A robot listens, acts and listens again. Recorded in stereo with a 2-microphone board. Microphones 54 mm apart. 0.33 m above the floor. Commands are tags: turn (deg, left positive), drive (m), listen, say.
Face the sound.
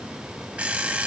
<turn deg="-30"/>
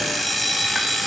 <say>Found it: an alarm clock, straight ahead, under 1 m away.</say>